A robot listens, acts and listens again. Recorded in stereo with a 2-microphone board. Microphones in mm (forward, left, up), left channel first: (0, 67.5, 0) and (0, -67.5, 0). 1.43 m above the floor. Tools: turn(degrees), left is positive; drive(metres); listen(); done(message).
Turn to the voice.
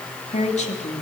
turn(degrees=60)
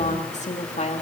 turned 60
turn(degrees=60)
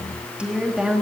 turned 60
done("Found it: a woman speaking, straight ahead, 2 to 4 m away.")